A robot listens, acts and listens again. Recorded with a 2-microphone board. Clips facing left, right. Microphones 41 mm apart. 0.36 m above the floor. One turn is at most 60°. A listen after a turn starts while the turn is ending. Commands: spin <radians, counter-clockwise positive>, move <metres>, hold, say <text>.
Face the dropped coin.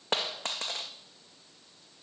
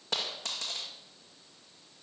spin 0.70
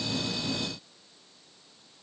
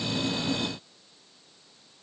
hold
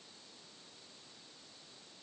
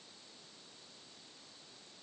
say I heard a dropped coin, but can't make it out now. It was about straight ahead or 100° left.